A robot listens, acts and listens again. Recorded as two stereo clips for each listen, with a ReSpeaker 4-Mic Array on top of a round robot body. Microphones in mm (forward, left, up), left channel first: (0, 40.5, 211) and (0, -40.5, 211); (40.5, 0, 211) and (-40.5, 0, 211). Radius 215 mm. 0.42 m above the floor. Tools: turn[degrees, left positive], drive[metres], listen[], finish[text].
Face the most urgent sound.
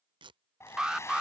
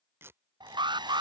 Thought: The alarm: 175° right.
Action: turn[-175]
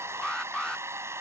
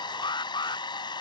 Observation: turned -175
Thought: The alarm is now 10° left.
Action: turn[10]
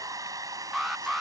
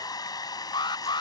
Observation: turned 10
Action: finish[Facing the alarm.]